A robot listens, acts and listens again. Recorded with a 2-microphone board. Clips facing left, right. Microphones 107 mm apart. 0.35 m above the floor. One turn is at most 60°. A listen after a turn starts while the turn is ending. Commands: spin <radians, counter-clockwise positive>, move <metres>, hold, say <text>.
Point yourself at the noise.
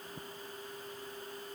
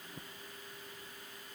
hold
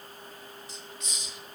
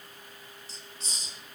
spin -0.61
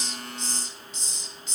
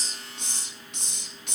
spin -1.05
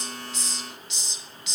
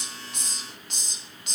spin -0.96
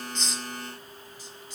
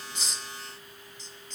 spin 0.17
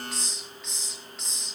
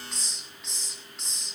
say Found it: a hiss, straight ahead.